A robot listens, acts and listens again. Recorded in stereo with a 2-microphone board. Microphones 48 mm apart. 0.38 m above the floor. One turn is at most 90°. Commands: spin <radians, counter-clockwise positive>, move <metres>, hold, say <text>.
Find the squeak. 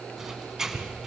spin -0.52
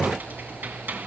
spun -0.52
spin -1.57
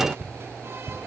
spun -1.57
spin -0.87
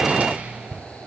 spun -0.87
spin -0.52
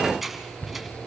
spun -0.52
say Found it: a squeak, straight ahead.